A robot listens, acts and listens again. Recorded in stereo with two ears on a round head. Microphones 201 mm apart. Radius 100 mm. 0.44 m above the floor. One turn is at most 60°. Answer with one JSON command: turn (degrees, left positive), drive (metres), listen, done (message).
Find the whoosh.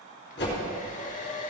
{"turn": 55}
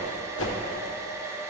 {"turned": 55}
{"turn": 60}
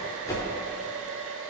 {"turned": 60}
{"turn": 15}
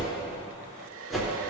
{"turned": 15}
{"done": "Facing the whoosh."}